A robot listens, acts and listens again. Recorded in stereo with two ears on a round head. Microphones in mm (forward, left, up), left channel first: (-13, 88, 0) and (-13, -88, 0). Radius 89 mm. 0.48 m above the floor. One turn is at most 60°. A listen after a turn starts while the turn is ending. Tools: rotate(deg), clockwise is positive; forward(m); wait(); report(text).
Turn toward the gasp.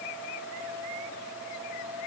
wait()
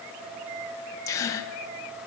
rotate(-15)
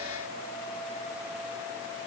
wait()
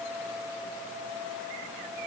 report("I heard a gasp, but can't make it out now. It was about straight ahead or 150° left.")